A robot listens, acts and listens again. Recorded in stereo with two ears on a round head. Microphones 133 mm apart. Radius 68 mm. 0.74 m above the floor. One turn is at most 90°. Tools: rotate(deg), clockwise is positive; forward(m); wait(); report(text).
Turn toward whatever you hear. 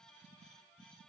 wait()
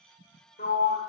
rotate(-65)
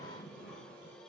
wait()
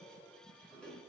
wait()
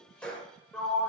report("Facing the sliding door, 1 to 2 m away.")